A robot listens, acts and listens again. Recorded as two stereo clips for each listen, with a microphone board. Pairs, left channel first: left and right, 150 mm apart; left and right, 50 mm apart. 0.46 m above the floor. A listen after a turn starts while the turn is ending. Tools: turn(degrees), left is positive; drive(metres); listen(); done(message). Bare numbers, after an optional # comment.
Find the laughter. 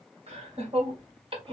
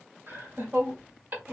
# The laughter: about 35° right or 145° right.
turn(-35)
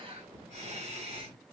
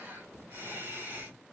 # The laughter: about 40° right or 140° right.
turn(-40)
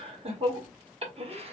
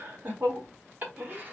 # The laughter: about 40° right or 140° right.
turn(-40)
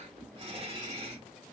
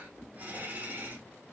# The laughter: about 40° right or 140° right.
turn(-40)
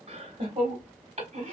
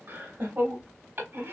# The laughter: about 40° right or 140° right.
turn(-40)
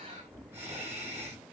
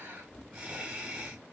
# So it is at 15° right.
turn(-15)
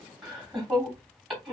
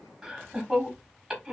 done("Found it: laughter, straight ahead, 1 to 2 m away.")